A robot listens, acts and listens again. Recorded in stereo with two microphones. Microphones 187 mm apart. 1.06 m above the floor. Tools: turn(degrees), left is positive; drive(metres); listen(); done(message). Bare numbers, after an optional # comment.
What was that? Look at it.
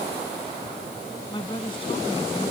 # The woman speaking: about 25° left or 155° left.
turn(25)
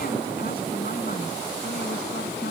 listen()
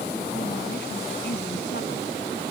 listen()
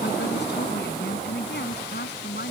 # So it is at 115° left.
turn(115)
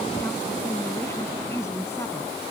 # The woman speaking is now 15° left.
turn(15)
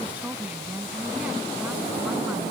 done("Found it: a woman speaking, straight ahead.")